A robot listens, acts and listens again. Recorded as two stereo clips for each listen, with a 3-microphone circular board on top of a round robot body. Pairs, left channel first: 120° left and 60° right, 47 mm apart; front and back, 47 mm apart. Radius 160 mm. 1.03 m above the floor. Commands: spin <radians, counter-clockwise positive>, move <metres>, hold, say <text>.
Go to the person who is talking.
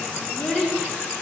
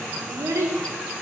spin -2.79
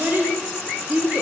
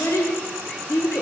spin -0.17
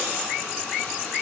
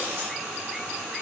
hold
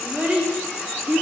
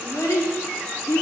move 1.0
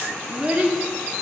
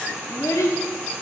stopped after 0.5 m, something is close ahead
say Blocked. The child speaking is further on, straight ahead.